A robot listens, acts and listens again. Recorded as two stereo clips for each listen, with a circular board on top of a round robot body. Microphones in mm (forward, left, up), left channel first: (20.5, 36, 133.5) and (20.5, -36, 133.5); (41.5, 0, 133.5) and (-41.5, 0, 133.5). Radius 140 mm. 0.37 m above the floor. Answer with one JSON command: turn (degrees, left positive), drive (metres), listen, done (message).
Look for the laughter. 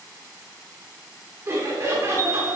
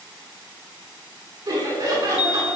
{"turn": -140}
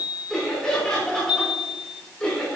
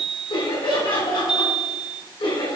{"turn": 15}
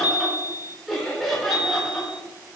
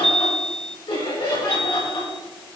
{"done": "Facing the laughter."}